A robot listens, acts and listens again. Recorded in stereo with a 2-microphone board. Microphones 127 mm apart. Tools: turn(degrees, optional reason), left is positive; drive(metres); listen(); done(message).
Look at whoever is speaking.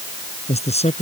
turn(degrees=55, reason="The man speaking: about 55° left or 125° left.")
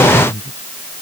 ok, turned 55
turn(degrees=70, reason="So it is at 70° left.")
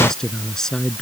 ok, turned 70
done("Found it: a man speaking, straight ahead.")